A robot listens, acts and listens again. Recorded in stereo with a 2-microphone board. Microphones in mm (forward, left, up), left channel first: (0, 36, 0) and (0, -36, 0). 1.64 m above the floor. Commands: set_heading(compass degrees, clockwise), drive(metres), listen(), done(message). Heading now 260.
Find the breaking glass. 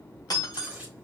set_heading(200)
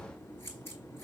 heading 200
listen()
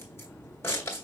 done("I heard breaking glass, but can't make it out now. It was about straight ahead or 60° left.")